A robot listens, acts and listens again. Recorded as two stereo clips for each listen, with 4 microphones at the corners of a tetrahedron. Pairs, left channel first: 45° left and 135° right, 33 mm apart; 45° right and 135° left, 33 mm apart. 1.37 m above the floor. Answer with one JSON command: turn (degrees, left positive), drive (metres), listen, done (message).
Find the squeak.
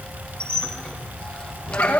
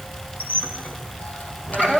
{"turn": -15}
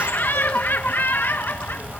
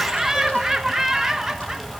{"listen": true}
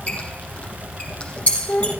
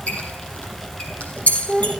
{"done": "Facing the squeak, over 4 m away."}